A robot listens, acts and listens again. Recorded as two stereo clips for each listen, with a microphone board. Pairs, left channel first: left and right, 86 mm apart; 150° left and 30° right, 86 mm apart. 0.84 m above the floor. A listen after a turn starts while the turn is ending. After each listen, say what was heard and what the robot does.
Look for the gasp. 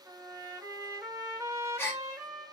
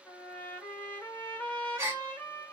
The gasp: 30° left. Turn 30° left.
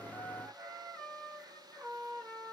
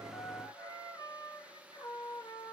Facing where the gasp came from. I can't hear it now.